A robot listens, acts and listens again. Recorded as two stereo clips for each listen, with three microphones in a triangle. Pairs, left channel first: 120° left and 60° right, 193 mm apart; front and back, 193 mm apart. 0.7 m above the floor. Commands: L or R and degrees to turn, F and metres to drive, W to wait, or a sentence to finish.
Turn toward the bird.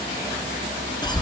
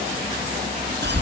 W
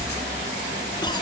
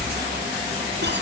W
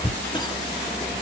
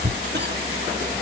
I can't make out a bird to turn to.